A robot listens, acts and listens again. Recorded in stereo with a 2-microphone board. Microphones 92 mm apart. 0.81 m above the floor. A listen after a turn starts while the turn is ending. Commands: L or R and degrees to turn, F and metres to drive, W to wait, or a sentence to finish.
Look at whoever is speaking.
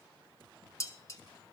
W
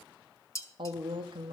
R60
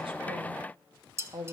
R45
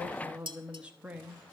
R15
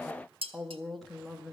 Facing the woman speaking.